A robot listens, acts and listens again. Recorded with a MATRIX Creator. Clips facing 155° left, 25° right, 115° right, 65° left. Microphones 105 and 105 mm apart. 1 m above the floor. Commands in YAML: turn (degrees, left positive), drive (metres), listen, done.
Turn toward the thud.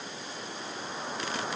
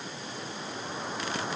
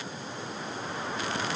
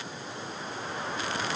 listen: true
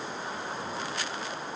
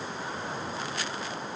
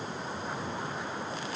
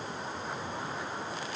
listen: true
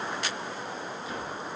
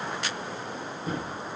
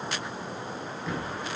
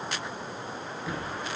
turn: -15
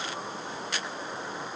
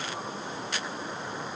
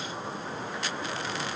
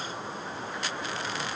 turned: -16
done: "I heard a thud from this way, but can't make it out now."